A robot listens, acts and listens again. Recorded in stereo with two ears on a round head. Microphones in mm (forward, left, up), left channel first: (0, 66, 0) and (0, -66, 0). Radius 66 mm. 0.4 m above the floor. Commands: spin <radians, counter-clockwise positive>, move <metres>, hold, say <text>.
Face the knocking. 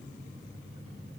hold
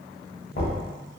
spin 1.13
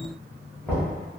spin 0.17
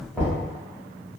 say Facing the knocking, 1 to 2 m away.